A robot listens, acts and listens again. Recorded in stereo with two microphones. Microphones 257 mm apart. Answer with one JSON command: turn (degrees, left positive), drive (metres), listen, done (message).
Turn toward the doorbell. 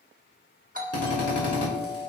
{"turn": -30}
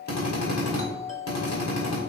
{"turn": -115}
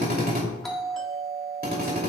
{"done": "Facing the doorbell, 1 to 2 m away."}